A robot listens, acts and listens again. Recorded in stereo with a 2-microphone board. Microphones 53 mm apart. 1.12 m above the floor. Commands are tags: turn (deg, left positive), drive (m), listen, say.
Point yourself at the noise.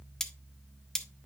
<turn deg="30"/>
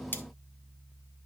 <turn deg="140"/>
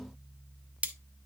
<turn deg="-30"/>
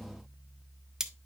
<turn deg="-10"/>
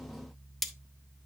<say>Found it: cutlery clinking, straight ahead, under 1 m away.</say>